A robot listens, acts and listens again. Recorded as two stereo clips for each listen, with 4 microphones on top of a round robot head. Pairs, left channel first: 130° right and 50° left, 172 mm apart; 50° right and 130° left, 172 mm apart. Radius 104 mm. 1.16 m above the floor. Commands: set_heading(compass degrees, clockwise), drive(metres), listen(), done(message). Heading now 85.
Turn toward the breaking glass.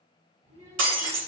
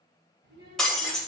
set_heading(45)
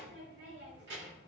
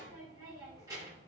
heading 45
done("I heard breaking glass from this way, but can't make it out now.")